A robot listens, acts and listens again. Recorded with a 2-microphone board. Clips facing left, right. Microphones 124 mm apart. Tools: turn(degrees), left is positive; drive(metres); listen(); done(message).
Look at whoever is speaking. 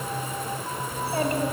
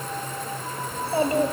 turn(degrees=-30)
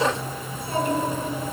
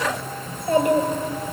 turn(degrees=-105)
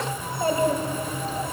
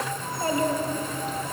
turn(degrees=30)
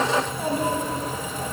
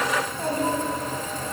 turn(degrees=10)
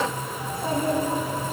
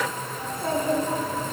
turn(degrees=10)
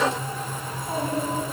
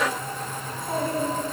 done("Found it: a child speaking, straight ahead, 2 to 4 m away.")